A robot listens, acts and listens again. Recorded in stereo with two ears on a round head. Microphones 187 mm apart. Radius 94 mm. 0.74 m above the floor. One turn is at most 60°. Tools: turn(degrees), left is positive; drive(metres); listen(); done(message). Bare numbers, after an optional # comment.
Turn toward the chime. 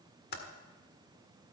listen()
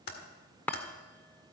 turn(30)
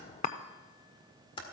# So it is at 145° left.
turn(60)
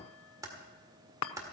# The chime is now 105° left.
turn(60)
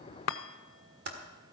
# The chime is now 65° left.
turn(60)
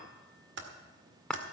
done("Found it: a chime, straight ahead.")